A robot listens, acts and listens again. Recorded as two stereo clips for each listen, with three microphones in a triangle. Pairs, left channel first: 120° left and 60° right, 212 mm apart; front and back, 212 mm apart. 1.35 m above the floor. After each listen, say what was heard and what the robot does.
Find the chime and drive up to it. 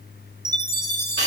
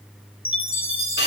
The chime: 40° left. Turn 40° left.
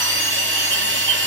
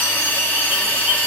Keep listening.
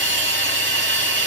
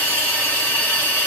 Keep listening.
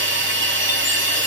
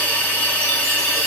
I heard a chime from this way, but can't make it out now. I did not reach it.